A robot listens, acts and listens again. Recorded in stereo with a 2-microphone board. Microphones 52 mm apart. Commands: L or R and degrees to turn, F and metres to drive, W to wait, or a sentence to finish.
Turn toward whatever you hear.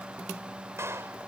R50
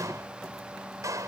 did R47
R80
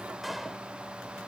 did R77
W
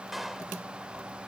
Found it: a clap, straight ahead.